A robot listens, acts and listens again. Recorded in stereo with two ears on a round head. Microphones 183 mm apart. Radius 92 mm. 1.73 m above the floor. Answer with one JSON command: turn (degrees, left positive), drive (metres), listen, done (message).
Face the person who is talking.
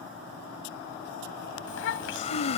{"turn": 70}
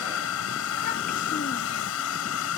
{"listen": true}
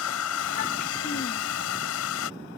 {"listen": true}
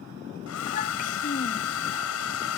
{"turn": 40}
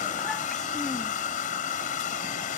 {"listen": true}
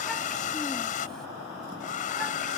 {"listen": true}
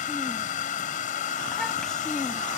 {"done": "I heard a child speaking from this way, but can't make it out now."}